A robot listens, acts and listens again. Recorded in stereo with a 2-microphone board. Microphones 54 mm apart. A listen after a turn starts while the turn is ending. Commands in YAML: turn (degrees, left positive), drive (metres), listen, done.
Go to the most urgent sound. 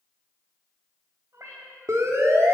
turn: -70
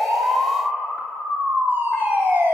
turn: -40
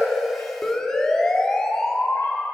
turn: 10
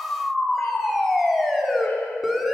drive: 1.0
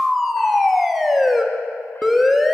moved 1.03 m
drive: 1.0
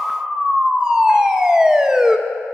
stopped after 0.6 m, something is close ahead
turn: -15
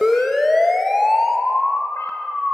done: "I am next to the siren."